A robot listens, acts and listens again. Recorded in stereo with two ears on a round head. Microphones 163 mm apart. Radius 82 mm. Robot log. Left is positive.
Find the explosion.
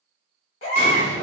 note: The explosion: about 45° right or 135° right.
cmd yaw -45
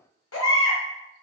cmd idle
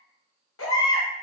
end: I heard an explosion, but can't make it out now. It was about straight ahead or 90° right.